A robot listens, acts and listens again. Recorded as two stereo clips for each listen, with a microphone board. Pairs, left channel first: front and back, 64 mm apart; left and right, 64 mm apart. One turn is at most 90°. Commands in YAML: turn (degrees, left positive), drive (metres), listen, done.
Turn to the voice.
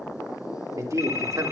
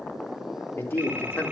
turn: 90
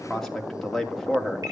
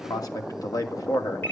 turn: 90
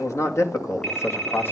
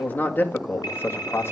turn: 50
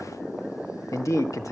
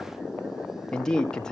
turn: 15
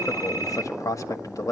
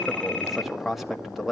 done: "Facing the man speaking, 1 to 2 m away."